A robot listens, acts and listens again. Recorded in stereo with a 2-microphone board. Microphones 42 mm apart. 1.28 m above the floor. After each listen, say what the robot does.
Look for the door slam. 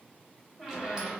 Keep listening.
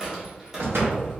Turn 90° right.
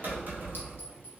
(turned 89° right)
I heard a door slam from this way, but can't make it out now.